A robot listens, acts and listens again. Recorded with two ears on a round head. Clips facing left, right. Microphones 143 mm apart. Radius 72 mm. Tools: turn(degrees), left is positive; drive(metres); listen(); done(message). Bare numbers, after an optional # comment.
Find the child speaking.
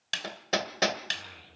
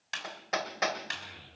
# The child speaking: about 30° right or 150° right.
turn(-30)
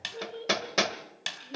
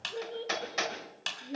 # So it is at 125° right.
turn(-125)
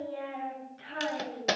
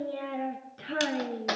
# The child speaking is now 60° right.
turn(-60)
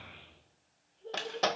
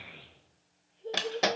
# The child speaking is now 20° right.
turn(-20)
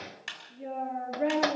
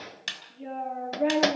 done("Found it: a child speaking, straight ahead, over 4 m away.")